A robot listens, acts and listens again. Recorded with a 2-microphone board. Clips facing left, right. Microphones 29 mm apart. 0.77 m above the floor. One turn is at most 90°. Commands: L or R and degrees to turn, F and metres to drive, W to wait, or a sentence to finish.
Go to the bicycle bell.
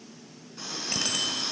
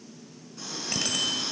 L30
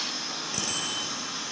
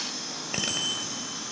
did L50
R50
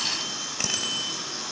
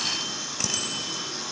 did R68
L15
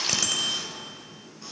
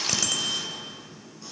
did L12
F1.0
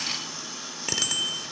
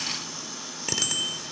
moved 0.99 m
F1.0
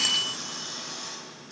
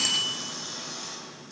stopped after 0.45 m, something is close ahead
L10
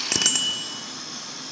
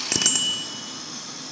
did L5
I am next to the bicycle bell.